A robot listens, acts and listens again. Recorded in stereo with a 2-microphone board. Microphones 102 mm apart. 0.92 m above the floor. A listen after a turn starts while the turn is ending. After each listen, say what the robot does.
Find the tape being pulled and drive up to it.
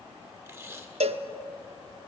Turn 25° right.
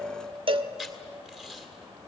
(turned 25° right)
Drive 1.0 m forward.
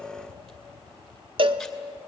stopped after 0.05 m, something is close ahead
Keep listening.
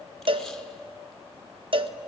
Keep listening.
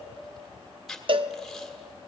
Something is in my way. I am facing the tape being pulled but have not reached it.